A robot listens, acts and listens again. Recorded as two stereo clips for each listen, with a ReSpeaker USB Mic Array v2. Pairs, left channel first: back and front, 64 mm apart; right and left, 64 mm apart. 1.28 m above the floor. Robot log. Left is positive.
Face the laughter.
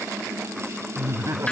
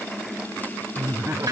note: The laughter: 40° left.
cmd yaw +40
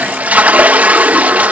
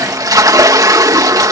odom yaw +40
cmd idle
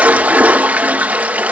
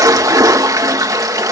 cmd idle
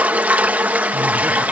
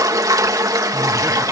end: Facing where the laughter came from. I can't hear it now.